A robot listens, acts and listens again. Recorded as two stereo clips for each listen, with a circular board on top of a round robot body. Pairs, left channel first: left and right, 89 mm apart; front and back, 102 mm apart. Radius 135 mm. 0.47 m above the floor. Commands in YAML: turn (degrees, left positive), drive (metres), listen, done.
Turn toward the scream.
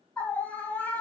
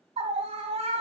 turn: 165
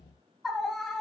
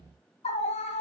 done: "Facing the scream."